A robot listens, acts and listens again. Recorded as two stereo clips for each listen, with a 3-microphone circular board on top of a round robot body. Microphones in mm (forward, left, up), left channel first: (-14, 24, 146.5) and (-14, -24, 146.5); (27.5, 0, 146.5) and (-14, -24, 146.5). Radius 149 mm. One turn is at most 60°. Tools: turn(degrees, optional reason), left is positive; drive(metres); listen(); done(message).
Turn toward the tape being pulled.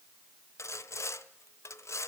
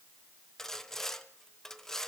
listen()
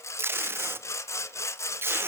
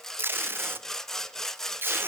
turn(degrees=-60, reason="The tape being pulled: 115° right.")
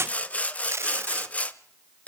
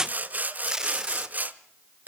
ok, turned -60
turn(degrees=-60, reason="The tape being pulled is now 75° right.")
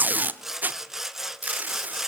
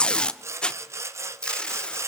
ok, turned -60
turn(degrees=-40, reason="The tape being pulled is now 40° right.")
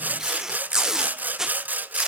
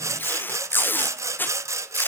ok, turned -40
turn(degrees=-10, reason="The tape being pulled is now 10° right.")
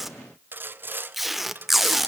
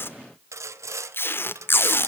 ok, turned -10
done("Facing the tape being pulled, 1 to 2 m away.")